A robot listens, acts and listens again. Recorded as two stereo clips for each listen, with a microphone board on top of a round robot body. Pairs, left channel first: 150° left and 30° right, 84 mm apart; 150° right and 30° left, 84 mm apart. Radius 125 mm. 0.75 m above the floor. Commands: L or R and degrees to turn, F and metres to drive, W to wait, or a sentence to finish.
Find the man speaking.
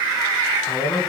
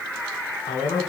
R155
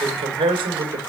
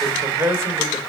R20
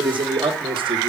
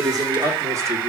R15
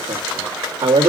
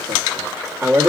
R35
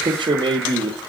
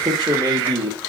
R10
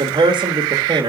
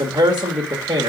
Facing the man speaking.